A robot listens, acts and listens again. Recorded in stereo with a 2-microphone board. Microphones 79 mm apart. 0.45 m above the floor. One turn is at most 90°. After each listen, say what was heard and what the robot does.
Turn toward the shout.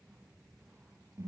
Keep listening.
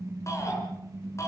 The shout: about 40° left or 140° left. Turn 40° left.
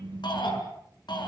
So it is at 100° left. Turn 90° left.
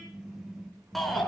Found it: a shout, straight ahead, over 4 m away.